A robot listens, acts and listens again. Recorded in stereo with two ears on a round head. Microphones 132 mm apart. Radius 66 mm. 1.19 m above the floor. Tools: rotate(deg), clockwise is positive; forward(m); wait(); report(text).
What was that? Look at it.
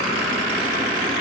wait()
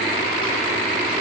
wait()
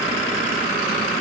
report("I can't make out anything to turn to.")